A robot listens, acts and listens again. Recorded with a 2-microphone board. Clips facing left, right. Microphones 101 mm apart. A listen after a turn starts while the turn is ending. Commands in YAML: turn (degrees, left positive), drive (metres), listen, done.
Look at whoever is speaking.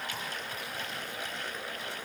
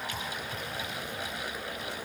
listen: true
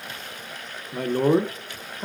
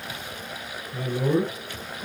turn: 60
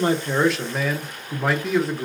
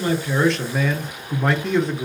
done: "Found it: a man speaking, straight ahead."